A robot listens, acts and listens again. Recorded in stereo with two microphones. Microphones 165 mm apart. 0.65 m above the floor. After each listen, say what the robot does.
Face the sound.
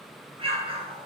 Turn 35° right.
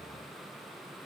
Keep listening.
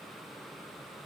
I heard an explosion, but can't make it out now. It was about straight ahead or 110° right.